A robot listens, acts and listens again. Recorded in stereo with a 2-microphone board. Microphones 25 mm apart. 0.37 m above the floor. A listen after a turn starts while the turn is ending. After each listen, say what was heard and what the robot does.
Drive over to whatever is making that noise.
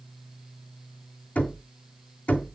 The knocking: about 70° left or 110° left. Turn 70° left.
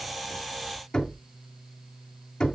So it is at 30° left. Turn 30° left.
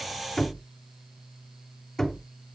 The knocking is now 15° left. Turn 15° left.
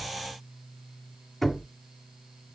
Drive 1.0 m forward.
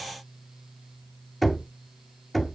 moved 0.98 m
Drive 1.0 m forward.
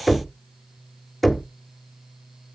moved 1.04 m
Drive 1.0 m forward.
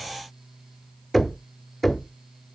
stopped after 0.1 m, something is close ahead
Arrived at the knocking, straight ahead.